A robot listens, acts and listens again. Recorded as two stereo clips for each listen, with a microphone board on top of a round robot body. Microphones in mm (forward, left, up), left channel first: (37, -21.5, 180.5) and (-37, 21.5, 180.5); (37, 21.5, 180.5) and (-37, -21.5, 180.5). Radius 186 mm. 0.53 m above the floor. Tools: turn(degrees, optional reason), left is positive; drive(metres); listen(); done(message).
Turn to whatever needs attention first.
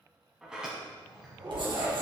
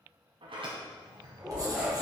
turn(degrees=125, reason="The shout: 125° left.")
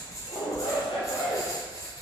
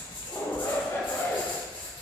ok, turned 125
turn(degrees=-25, reason="The shout is now 25° right.")
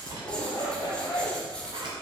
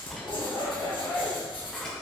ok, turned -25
done("Facing the shout.")